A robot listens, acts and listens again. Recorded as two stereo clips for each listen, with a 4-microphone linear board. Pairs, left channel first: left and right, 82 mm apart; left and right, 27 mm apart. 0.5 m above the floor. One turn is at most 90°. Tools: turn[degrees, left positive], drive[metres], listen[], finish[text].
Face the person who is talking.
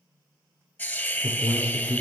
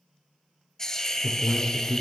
Thought: The man speaking: about 70° left or 110° left.
Action: turn[70]
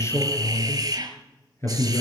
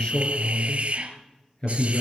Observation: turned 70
Thought: So it is at 35° left.
Action: turn[35]
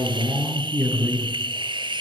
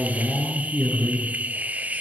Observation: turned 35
Action: finish[Facing the man speaking.]